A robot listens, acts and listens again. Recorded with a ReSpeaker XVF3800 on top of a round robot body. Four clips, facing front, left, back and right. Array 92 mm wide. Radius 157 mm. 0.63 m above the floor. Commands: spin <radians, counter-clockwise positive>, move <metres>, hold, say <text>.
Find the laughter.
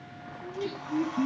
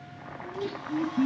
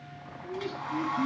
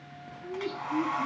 spin 0.87
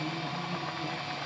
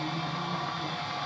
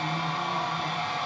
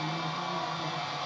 hold
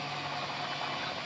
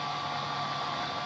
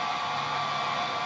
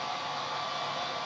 hold
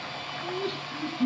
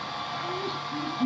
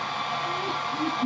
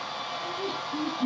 say Found it: laughter, straight ahead.